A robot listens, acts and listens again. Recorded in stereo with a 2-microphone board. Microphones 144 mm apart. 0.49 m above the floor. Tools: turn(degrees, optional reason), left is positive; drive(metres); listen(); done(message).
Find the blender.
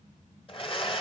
turn(degrees=40, reason="The blender: about 40° left or 140° left.")
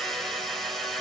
done("Facing the blender.")